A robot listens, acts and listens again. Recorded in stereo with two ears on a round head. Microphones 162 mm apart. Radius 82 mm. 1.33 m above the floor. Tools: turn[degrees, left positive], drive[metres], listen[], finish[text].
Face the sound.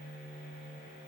Action: listen[]
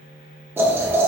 Action: turn[-30]
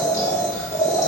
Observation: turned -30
Thought: So it is at 15° left.
Action: turn[15]
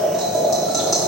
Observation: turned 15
Action: finish[Facing the boiling.]